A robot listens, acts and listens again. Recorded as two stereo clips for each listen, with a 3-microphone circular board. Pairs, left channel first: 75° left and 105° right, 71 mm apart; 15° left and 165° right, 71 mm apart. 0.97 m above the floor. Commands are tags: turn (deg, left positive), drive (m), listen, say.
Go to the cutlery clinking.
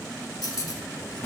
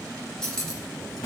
<turn deg="95"/>
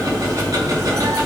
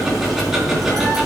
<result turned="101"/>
<listen/>
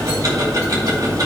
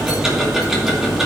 <listen/>
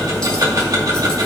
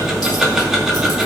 <say>Facing where the cutlery clinking came from. I can't hear it now. I did not reach it.</say>